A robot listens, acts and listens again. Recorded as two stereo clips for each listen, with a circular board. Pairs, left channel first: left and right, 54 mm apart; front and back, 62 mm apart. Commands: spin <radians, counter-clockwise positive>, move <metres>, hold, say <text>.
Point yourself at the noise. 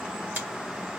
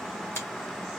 spin -0.70
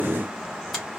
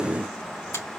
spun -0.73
hold
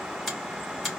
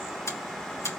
say Found it: a finger snap, straight ahead.